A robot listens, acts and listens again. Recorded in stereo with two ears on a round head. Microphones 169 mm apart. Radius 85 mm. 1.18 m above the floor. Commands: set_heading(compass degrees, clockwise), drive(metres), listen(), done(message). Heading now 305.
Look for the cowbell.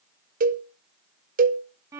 set_heading(350)
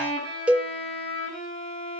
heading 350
set_heading(0)
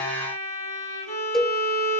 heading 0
done("Facing the cowbell, under 1 m away.")